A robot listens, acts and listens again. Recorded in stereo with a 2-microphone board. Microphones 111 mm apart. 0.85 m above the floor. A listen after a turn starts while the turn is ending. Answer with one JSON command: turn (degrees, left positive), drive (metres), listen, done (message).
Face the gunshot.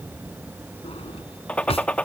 {"turn": 30}
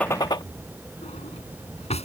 {"turn": 140}
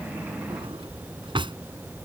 {"done": "Facing where the gunshot came from. I can't hear it now."}